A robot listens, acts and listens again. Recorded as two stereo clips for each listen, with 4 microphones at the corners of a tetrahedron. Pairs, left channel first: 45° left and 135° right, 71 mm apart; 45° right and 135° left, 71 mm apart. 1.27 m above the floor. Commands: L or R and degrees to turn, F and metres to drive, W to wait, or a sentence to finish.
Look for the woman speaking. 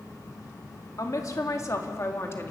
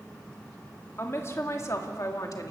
R10
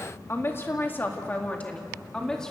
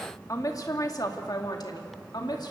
R35
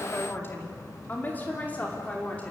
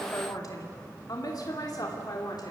R25
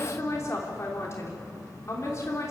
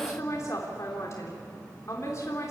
Found it: a woman speaking, straight ahead, 2 to 4 m away.